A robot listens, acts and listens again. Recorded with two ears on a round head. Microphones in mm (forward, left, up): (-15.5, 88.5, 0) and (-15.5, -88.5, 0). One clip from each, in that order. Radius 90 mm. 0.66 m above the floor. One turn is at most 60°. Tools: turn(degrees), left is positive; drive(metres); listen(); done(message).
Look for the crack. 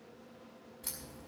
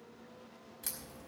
turn(degrees=-60)
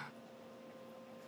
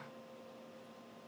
listen()
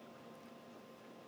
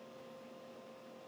done("I heard a crack, but can't make it out now. It was about straight ahead or 60° right.")